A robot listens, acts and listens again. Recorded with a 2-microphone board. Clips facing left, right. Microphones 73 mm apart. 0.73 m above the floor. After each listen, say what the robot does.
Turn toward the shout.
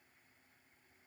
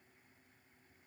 Keep listening.
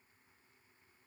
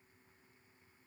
Keep listening.
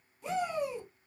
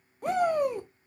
Turn 55° right.
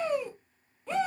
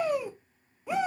Turn 15° right.
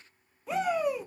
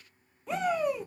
Facing the shout.